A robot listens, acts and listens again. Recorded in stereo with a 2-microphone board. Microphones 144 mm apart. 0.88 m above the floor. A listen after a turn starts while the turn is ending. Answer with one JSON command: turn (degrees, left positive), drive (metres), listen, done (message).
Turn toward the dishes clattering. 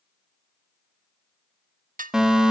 {"turn": -70}
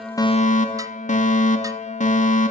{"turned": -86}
{"listen": true}
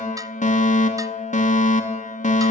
{"listen": true}
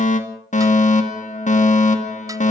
{"done": "I heard dishes clattering, but can't make it out now. It was about 20° left or 25° right."}